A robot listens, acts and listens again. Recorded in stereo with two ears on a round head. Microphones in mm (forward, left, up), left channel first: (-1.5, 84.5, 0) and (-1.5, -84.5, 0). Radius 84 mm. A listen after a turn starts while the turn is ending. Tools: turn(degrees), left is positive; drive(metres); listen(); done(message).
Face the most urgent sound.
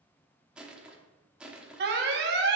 turn(degrees=-60)
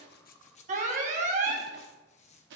turn(degrees=-45)
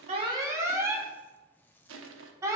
turn(degrees=-15)
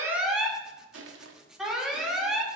done("Facing the alarm, 1 to 2 m away.")